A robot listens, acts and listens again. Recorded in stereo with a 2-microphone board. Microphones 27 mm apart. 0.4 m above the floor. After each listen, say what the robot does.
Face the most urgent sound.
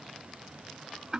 Keep listening.
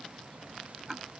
Keep listening.
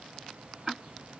I can't make out anything urgent, only ticking.